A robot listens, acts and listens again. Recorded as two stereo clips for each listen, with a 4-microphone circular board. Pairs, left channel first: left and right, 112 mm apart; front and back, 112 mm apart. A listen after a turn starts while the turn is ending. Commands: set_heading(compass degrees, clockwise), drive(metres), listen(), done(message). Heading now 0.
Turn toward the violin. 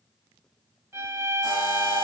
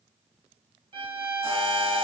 set_heading(150)
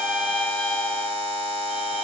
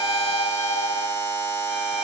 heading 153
listen()
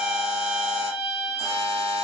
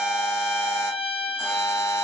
done("Found it: a violin, straight ahead, under 1 m away.")